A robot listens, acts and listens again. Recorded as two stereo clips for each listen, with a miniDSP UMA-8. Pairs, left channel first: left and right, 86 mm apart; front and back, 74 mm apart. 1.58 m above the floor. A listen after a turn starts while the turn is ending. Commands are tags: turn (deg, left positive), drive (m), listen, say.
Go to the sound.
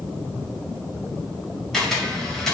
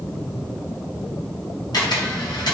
<drive m="1.0"/>
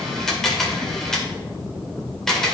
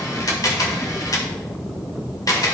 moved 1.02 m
<drive m="1.0"/>
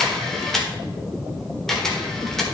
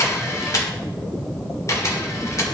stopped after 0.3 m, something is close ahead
<say>Arrived at the camera shutter, straight ahead.</say>